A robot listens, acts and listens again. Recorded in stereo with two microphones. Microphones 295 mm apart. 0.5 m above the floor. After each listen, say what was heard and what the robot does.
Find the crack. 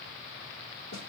Keep listening.
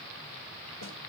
Keep listening.
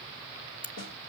The crack: about 40° left or 140° left. Turn 40° left.
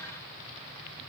Keep listening.
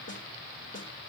I heard a crack, but can't make it out now. It was about straight ahead or 100° left.